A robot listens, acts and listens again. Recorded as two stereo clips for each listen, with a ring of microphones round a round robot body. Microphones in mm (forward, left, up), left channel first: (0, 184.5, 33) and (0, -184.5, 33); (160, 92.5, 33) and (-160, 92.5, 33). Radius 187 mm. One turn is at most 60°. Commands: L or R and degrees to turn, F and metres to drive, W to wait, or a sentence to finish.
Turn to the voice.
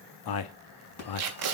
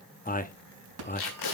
L60
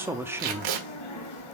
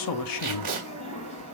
Found it: a man speaking, straight ahead, under 1 m away.